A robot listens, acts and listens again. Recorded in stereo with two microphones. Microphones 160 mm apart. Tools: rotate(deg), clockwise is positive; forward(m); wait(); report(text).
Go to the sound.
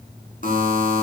rotate(-60)
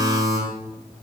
forward(1.0)
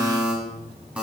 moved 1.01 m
forward(1.0)
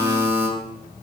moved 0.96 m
rotate(10)
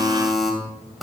forward(1.0)
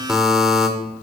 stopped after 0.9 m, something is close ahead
report("I am next to the buzzer.")